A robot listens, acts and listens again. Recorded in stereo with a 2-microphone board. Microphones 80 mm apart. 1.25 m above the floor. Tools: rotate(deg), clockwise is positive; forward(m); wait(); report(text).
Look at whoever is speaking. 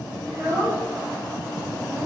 rotate(40)
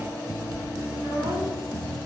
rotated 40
rotate(100)
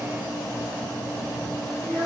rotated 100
report("Facing the child speaking, 1 to 2 m away.")